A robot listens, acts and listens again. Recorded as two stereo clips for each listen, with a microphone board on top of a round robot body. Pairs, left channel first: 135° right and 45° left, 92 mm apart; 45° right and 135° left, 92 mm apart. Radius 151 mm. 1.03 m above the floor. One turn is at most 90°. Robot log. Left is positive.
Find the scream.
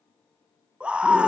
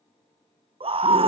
note: The scream: 125° left.
cmd yaw +90
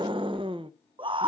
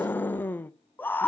note: The scream is now 25° left.
cmd yaw +25
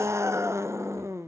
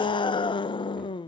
note: The scream is now 15° right.
cmd yaw -15
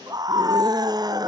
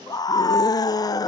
end: Found it: a scream, straight ahead.